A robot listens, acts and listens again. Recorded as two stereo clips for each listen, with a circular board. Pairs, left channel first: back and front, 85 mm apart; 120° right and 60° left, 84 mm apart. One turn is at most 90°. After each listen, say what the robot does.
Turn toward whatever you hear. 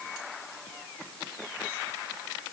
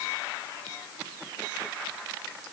Keep listening.
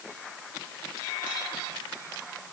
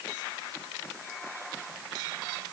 Keep listening.
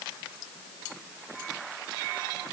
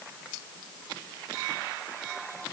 I can't make out anything to turn to.